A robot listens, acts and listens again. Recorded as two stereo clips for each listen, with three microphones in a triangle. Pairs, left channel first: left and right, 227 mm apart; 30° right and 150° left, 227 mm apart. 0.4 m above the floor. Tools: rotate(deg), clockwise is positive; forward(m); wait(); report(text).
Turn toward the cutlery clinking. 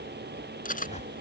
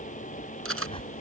rotate(-140)
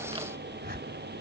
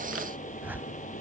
wait()
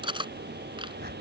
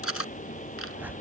rotate(20)
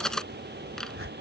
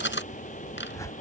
report("Facing the cutlery clinking.")